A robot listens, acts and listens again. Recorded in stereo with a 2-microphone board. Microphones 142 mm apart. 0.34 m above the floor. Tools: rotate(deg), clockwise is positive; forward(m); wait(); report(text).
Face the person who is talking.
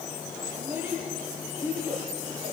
rotate(30)
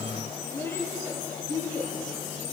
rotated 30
rotate(-15)
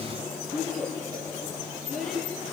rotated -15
report("Facing the child speaking.")